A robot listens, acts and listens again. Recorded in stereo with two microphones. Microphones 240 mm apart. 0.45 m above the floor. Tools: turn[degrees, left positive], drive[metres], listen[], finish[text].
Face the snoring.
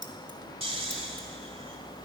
Thought: The snoring: about 25° right or 155° right.
Action: turn[-25]
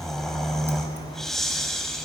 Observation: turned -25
Action: finish[Found it: snoring, straight ahead.]